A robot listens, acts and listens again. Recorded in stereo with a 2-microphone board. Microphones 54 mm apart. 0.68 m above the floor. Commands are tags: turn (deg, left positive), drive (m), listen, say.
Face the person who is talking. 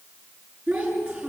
<turn deg="-15"/>
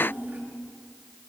<turn deg="-155"/>
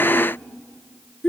<turn deg="10"/>
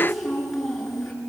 <say>Found it: a child speaking, straight ahead, over 4 m away.</say>